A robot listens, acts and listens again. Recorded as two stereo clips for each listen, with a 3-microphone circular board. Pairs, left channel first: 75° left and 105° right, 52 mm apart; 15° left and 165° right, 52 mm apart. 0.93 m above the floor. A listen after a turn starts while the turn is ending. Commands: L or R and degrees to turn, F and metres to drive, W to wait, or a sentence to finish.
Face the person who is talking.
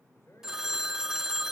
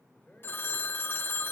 L75
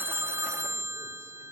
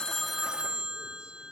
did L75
W
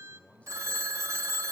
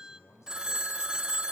L10
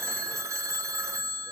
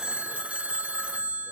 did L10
W
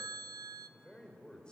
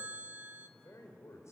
Found it: a man speaking, straight ahead, 2 to 4 m away.